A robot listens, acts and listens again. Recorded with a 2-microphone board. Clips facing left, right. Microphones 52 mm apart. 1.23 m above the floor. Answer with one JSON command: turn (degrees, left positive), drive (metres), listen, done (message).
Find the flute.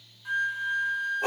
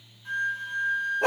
{"turn": 30}
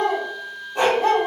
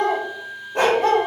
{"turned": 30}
{"turn": -15}
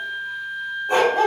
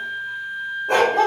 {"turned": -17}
{"done": "Facing the flute, under 1 m away."}